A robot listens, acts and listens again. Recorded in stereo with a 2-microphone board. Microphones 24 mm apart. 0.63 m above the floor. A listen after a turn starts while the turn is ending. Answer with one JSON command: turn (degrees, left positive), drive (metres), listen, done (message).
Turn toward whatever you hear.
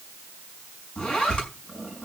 {"turn": 35}
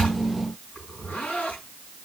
{"turn": 110}
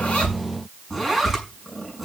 {"done": "Facing the zipper, over 4 m away."}